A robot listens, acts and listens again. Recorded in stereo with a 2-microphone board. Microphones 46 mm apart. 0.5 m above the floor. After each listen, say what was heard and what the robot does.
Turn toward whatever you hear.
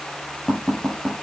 Turn 30° left.
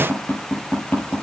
So it is at 150° left. Turn 150° left.
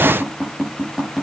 The tapping is now 10° right. Turn 10° right.
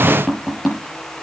Found it: tapping, straight ahead.